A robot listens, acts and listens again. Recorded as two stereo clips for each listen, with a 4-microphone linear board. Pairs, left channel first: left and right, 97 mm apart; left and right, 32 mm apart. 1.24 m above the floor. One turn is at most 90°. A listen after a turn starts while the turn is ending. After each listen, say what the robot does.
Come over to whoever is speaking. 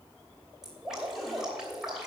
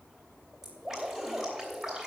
Keep listening.
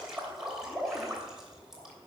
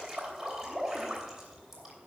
Keep listening.
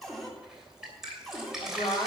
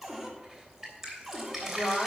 Turn 90° left.
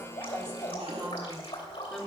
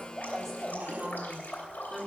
Drive 1.0 m forward.
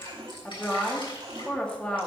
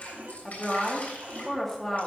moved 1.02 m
Turn 10° left.
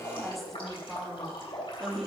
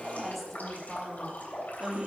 Drive 1.0 m forward.
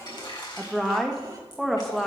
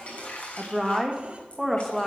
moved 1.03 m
Drive 1.0 m forward.
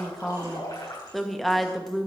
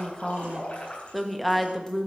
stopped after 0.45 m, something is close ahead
Arrived at the woman speaking, straight ahead.